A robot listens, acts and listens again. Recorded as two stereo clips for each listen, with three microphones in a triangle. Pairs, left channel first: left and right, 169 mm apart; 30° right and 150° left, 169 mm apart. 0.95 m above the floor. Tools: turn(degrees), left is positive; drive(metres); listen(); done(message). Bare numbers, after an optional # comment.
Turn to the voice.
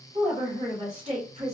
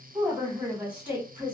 # The woman speaking: 130° right.
turn(-130)
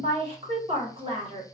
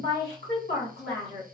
# The woman speaking is now 35° right.
turn(-35)
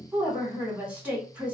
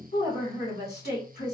# The woman speaking is now 10° right.
turn(-10)
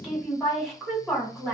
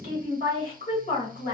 done("Facing the woman speaking.")